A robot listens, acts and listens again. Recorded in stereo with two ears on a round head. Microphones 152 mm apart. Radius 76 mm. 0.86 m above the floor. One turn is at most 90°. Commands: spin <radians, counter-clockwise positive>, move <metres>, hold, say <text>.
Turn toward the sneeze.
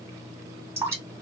hold
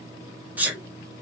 spin -0.52
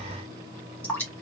hold
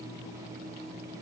say I heard a sneeze, but can't make it out now. It was about 20° left or 140° right.